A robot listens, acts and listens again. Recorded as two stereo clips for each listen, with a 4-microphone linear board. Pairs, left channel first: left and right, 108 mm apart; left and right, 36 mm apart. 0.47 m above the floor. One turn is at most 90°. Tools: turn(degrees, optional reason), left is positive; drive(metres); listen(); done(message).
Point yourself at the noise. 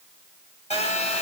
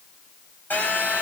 turn(degrees=90)
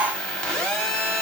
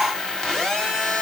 turn(degrees=10, reason="So it is at 10° left.")
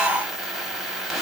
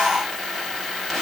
done("Found it: a phone buzzing, straight ahead, 1 to 2 m away.")